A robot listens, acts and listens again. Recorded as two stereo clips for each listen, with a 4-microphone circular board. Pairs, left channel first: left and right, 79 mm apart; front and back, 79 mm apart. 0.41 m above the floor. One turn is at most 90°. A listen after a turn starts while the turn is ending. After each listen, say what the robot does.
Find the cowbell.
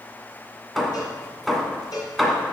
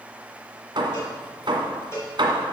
Turn 55° left.
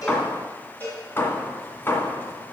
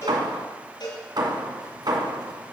Turn 25° left.
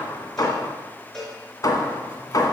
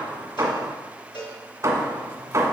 Facing the cowbell, 2 to 4 m away.